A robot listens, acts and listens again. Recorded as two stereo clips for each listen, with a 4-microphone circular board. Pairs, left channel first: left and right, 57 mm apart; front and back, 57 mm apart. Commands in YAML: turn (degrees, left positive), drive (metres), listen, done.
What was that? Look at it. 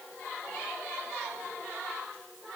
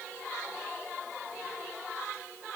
listen: true
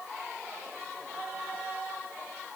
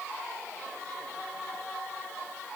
listen: true
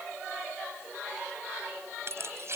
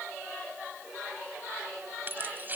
turn: -125
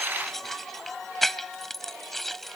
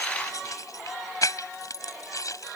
done: "Facing the keys jangling."